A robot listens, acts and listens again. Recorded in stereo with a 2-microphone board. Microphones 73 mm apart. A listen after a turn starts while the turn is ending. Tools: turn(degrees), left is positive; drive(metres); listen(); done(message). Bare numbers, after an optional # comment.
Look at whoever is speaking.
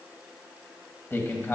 # The man speaking: about 30° left or 150° left.
turn(30)
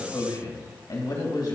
# So it is at 115° left.
turn(115)
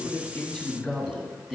done("Facing the man speaking, 2 to 4 m away.")